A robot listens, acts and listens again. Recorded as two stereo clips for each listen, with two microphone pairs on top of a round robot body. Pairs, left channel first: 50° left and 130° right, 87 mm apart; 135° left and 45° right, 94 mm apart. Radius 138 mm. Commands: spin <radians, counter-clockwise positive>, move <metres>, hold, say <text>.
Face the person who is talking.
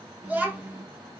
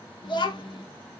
spin 2.79
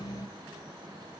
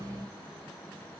hold
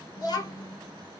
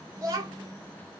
say Found it: a child speaking, straight ahead.